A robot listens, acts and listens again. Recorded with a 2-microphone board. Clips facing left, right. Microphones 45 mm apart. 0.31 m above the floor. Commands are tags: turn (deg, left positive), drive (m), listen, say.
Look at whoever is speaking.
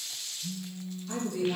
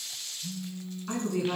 <turn deg="-60"/>
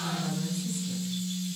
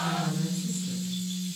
<listen/>
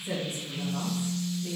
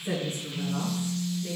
<turn deg="-35"/>
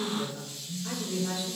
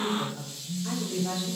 <say>Found it: a woman speaking, straight ahead.</say>